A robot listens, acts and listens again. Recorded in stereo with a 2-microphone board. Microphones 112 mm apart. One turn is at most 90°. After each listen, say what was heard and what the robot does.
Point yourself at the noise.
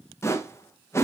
The whoosh: about 25° left or 155° left. Turn 25° left.
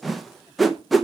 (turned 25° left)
Found it: a whoosh, straight ahead, under 1 m away.